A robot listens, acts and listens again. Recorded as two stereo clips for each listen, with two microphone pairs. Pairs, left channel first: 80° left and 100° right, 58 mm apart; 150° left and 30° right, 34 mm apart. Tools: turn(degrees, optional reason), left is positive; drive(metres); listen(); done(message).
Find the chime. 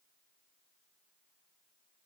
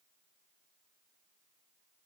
listen()
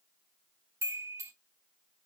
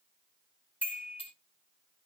turn(degrees=-65, reason="The chime: 65° right.")
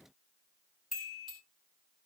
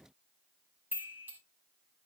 turn(degrees=-10, reason="The chime is now 10° right.")
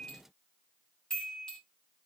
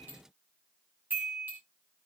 done("Found it: a chime, straight ahead, 2 to 4 m away.")